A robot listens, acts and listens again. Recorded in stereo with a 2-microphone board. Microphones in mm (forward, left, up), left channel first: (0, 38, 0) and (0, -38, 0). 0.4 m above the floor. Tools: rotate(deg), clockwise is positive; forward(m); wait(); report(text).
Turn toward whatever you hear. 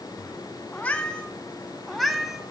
rotate(30)
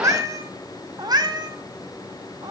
rotate(110)
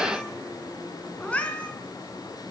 rotate(-15)
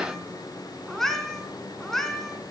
report("Found it: a cat meowing, straight ahead.")